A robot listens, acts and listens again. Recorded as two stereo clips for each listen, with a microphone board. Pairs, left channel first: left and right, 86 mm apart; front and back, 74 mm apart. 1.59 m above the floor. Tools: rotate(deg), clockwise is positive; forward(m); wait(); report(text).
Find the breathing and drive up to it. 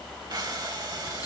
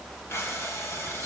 rotate(55)
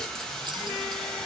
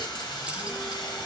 forward(1.0)
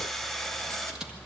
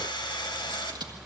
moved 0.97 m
forward(1.0)
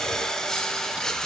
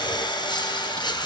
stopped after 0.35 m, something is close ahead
report("Arrived at the breathing, straight ahead.")